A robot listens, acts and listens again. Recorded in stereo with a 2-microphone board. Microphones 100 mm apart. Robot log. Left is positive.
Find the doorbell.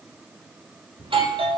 note: The doorbell: about 65° right or 115° right.
cmd yaw -65
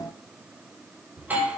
note: So it is at 20° right.
cmd yaw -20
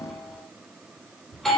end: Facing the doorbell, 2 to 4 m away.